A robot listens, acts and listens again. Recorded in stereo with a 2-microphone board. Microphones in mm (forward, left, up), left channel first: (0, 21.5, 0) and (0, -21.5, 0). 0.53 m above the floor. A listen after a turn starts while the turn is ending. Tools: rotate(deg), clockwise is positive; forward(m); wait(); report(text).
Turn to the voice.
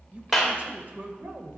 rotate(45)
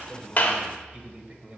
rotate(30)
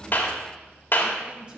rotate(25)
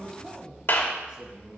rotate(25)
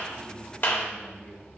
rotate(-10)
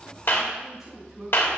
report("Facing the man speaking, 2 to 4 m away.")